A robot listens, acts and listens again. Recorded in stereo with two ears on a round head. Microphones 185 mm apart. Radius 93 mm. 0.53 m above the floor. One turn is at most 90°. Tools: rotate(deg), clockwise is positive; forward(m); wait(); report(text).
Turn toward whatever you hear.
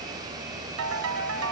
rotate(90)
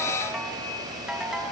report("Facing the ringtone, 2 to 4 m away.")